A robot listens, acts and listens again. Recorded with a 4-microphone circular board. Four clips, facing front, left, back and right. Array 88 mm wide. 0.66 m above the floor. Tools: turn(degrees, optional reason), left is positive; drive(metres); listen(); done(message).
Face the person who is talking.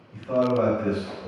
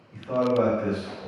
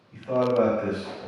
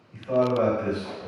turn(degrees=175, reason="The man speaking: 175° left.")
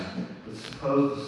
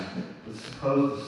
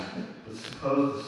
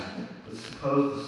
turn(degrees=65, reason="The man speaking is now 65° left.")
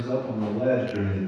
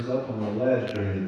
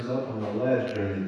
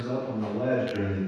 done("Facing the man speaking.")